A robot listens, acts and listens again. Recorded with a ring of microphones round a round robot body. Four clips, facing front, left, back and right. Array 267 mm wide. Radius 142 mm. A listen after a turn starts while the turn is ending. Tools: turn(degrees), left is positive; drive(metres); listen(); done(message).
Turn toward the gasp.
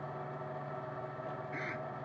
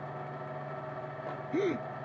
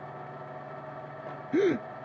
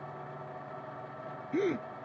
turn(degrees=180)
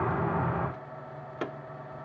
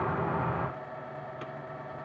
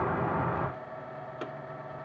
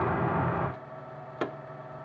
done("I heard a gasp from this way, but can't make it out now.")